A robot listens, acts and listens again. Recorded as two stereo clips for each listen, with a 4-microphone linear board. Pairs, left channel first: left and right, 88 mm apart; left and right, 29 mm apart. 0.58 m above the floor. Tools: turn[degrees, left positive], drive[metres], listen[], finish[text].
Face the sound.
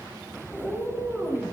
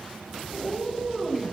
Action: turn[-30]
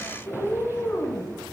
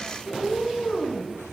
Thought: So it is at 20° left.
Action: turn[20]
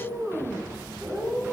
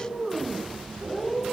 Thought: The cat meowing is now 10° right.
Action: turn[-10]
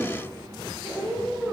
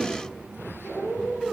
Action: finish[Found it: a cat meowing, straight ahead.]